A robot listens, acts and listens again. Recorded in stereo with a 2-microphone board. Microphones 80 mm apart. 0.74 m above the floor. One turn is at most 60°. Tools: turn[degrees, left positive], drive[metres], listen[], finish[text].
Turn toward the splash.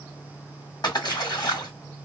Thought: The splash: about 60° left or 120° left.
Action: turn[60]
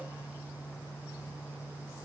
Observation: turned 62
Action: listen[]
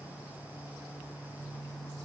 Action: finish[I heard a splash, but can't make it out now. It was about 5° right or 60° left.]